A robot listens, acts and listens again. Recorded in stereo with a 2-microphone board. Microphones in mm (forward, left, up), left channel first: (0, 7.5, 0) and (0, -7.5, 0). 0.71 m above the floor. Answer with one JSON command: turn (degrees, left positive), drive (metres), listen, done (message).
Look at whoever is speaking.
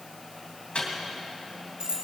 {"listen": true}
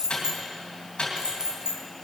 {"listen": true}
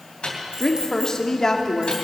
{"turn": 35}
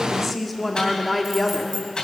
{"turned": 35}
{"done": "Facing the woman speaking, 1 to 2 m away."}